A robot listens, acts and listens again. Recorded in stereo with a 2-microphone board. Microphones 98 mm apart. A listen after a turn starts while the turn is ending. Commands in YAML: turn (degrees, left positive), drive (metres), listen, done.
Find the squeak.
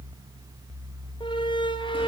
turn: 55
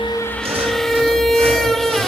done: "Found it: a squeak, straight ahead, under 1 m away."